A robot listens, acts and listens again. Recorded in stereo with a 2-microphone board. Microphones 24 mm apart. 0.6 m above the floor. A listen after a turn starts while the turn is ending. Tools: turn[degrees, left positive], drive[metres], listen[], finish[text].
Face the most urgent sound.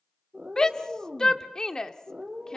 Thought: The shout: about 30° left or 150° left.
Action: turn[30]
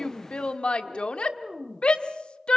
Thought: So it is at 115° left.
Action: turn[115]
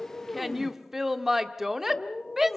Thought: The shout is now 20° right.
Action: turn[-20]
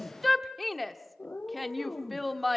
Action: finish[Facing the shout.]